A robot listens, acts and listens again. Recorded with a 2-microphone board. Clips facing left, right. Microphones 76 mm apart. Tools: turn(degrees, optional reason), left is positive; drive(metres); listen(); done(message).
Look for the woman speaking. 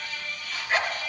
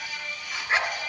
listen()
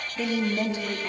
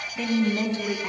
turn(degrees=-90)
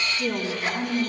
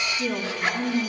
done("Facing the woman speaking.")